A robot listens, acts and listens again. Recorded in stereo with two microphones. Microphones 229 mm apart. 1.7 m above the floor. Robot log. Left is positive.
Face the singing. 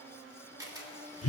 cmd idle
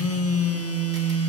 cmd idle
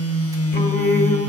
note: The singing: about 45° left or 135° left.
cmd yaw +45
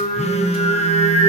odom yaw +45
note: So it is at 20° left.
cmd yaw +20
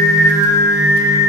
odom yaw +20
note: The singing is now 10° right.
cmd yaw -10
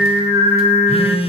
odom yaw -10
note: The singing is now 10° right.
cmd yaw -10
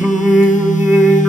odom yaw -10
end: Found it: singing, straight ahead, 1 to 2 m away.